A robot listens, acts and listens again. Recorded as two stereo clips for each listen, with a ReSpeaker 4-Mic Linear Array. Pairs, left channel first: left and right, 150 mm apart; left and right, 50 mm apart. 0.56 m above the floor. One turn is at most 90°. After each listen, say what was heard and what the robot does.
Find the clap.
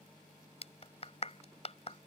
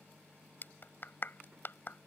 The clap: about 45° left or 135° left. Turn 45° left.
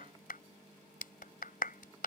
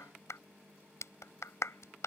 So it is at 85° left. Turn 85° left.
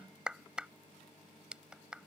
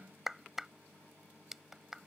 Found it: a clap, straight ahead.